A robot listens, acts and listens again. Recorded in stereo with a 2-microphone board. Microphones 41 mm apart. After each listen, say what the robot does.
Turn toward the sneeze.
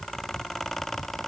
Keep listening.
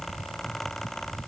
Keep listening.
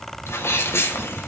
Turn 90° left.
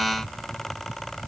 I heard a sneeze from this way, but can't make it out now.